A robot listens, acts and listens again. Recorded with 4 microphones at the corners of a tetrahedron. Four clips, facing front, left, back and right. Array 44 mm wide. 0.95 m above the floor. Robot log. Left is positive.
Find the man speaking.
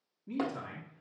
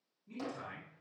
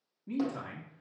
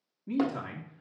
note: The man speaking: 110° right.
cmd yaw -110
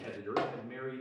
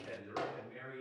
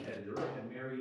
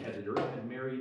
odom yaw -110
note: The man speaking is now 60° right.
cmd yaw -60
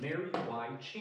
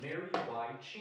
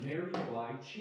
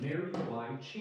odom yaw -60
note: The man speaking is now 15° left.
cmd yaw +15
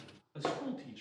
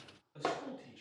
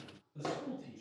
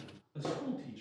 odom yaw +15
end: Facing the man speaking.